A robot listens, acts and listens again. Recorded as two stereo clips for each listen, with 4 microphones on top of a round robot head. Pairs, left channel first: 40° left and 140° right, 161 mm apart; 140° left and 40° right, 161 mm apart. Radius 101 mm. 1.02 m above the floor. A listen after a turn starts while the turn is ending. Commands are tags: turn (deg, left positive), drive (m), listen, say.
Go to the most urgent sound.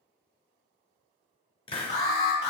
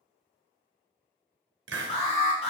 <turn deg="90"/>
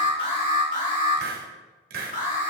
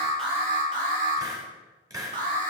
<drive m="1.0"/>
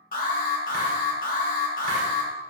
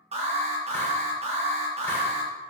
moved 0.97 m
<turn deg="10"/>
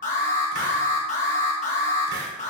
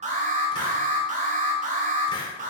<drive m="1.0"/>
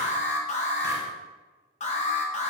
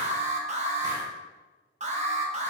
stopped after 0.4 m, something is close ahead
<say>Arrived at the alarm, straight ahead.</say>